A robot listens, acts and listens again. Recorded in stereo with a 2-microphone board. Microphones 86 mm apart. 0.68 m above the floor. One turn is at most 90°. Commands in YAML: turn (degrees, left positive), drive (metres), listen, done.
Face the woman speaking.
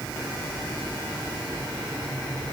listen: true
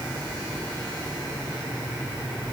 listen: true
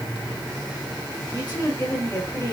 turn: 25
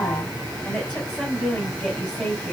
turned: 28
done: "Facing the woman speaking, over 4 m away."